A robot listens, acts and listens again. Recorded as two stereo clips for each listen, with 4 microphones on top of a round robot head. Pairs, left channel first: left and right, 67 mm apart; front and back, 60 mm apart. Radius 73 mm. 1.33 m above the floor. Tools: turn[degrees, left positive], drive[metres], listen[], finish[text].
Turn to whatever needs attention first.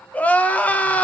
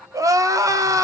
Thought: The crying: 160° left.
Action: turn[160]
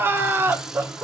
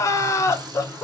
Thought: The crying is now 35° right.
Action: turn[-35]
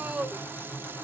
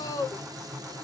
Thought: The crying is now 15° right.
Action: turn[-15]
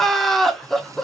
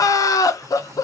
Action: finish[Found it: crying, straight ahead.]